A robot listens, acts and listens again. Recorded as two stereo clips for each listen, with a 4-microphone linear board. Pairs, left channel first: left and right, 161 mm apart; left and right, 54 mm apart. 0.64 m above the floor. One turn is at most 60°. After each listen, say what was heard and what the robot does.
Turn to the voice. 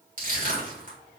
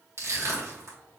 Keep listening.
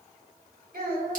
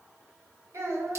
The child speaking: about 70° right or 110° right. Turn 60° right.
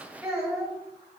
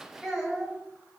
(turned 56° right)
So it is at 20° right. Turn 20° right.
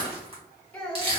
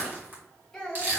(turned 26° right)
Found it: a child speaking, straight ahead, 1 to 2 m away.